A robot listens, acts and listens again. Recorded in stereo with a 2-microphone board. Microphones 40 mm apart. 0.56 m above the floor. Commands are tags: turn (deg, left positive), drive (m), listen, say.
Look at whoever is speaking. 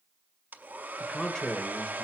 <turn deg="20"/>
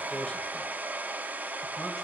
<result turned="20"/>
<listen/>
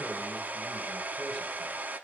<listen/>
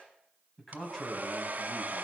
<turn deg="30"/>
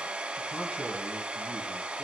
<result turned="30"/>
<listen/>
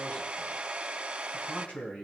<turn deg="140"/>
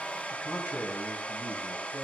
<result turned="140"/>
<turn deg="55"/>
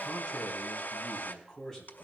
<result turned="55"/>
<say>Facing the man speaking, 2 to 4 m away.</say>